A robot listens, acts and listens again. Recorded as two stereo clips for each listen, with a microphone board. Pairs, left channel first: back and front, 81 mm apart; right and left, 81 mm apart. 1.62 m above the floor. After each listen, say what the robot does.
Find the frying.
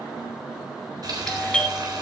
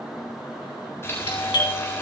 Turn 30° right.
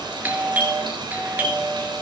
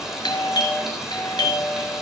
Facing the frying.